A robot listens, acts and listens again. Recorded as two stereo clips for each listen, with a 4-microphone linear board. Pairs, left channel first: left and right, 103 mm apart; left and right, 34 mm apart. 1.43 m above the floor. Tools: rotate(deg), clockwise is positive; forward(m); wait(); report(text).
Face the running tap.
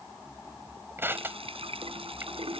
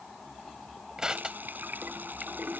rotate(65)
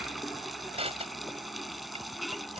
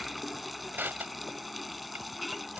report("Found it: a running tap, straight ahead.")